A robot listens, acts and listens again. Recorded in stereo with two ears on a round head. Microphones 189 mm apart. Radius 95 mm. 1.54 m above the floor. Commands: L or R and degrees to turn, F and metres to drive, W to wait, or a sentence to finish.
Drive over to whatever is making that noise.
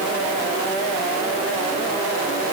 W
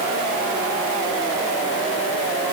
W
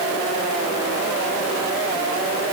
I can't make out anything.